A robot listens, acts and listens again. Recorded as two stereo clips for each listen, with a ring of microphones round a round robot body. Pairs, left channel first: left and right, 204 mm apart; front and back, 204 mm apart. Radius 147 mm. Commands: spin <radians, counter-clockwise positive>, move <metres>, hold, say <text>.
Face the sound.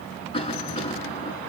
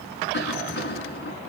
spin 0.44
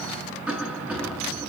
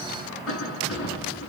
say Found it: a cough, straight ahead, over 4 m away.